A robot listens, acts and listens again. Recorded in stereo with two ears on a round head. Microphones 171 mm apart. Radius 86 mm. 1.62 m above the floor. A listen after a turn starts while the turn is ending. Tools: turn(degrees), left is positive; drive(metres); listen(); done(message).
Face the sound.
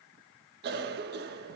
turn(degrees=-55)
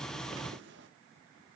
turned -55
turn(degrees=-65)
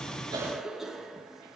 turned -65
done("Found it: a cough, straight ahead.")